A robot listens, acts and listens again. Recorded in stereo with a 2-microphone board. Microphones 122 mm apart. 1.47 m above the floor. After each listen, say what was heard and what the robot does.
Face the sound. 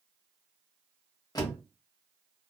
The door slam: about 30° left or 150° left. Turn 30° left.
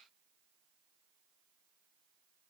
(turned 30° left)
Keep listening.
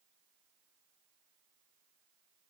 I heard a door slam, but can't make it out now. It was about straight ahead or 120° left.